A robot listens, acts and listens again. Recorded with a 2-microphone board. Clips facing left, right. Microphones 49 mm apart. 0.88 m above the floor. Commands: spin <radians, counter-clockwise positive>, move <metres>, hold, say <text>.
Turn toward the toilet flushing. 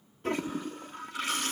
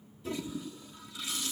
spin 0.87
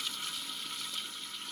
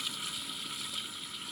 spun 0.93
say Facing the toilet flushing.